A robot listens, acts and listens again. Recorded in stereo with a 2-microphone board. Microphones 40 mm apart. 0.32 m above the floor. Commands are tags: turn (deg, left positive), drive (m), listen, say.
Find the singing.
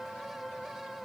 <listen/>
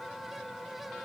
<listen/>
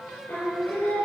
<turn deg="65"/>
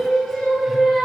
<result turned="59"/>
<say>Facing the singing.</say>